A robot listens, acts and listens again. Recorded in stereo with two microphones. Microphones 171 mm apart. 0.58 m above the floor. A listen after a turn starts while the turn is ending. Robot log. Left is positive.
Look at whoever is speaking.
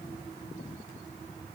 cmd idle
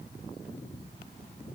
cmd idle
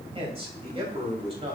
note: The man speaking: about 35° right or 145° right.
cmd yaw -35
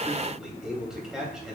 end: Found it: a man speaking, straight ahead, 2 to 4 m away.